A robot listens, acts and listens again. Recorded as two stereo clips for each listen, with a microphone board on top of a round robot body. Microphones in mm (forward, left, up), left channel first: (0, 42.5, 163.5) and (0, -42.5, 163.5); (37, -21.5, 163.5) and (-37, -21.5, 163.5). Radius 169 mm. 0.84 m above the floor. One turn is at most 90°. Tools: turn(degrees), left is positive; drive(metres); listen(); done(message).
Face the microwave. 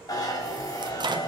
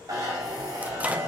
turn(degrees=-90)
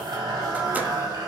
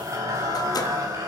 turn(degrees=-20)
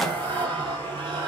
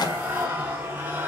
done("Facing the microwave, 1 to 2 m away.")